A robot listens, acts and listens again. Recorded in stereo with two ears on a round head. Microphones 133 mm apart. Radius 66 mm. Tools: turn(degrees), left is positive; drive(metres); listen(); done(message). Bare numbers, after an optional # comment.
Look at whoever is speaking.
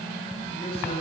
# The man speaking: about 35° left or 145° left.
turn(35)
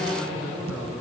done("Found it: a man speaking, straight ahead, over 4 m away.")